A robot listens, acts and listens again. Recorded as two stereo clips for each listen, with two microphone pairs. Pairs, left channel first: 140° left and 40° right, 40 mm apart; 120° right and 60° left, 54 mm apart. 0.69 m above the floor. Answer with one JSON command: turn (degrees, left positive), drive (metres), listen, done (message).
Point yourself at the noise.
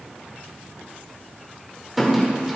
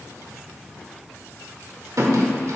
{"turn": 45}
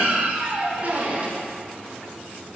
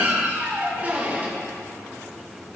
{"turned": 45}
{"done": "Found it: a squeak, straight ahead, 1 to 2 m away."}